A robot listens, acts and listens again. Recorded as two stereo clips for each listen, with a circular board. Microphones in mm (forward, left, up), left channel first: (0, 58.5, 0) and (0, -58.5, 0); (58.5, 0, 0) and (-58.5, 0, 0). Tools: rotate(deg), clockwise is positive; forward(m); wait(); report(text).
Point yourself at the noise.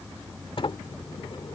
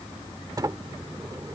rotate(-125)
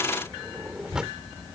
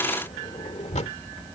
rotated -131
report("Facing the sliding door.")